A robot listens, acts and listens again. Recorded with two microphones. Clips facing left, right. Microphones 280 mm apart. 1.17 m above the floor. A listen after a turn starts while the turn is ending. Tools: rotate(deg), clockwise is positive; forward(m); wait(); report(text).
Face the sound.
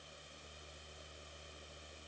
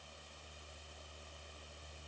wait()
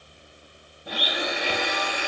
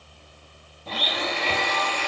rotate(-30)
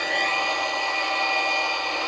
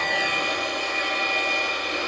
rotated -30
rotate(20)
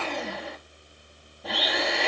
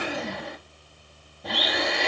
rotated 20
report("Found it: a blender, straight ahead.")